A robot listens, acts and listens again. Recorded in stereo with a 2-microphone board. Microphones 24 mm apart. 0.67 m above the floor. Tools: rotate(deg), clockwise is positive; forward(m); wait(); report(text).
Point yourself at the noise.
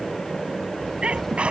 rotate(55)
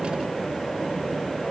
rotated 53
wait()
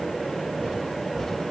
report("I heard a sneeze, but can't make it out now. It was about 5° right or 70° right.")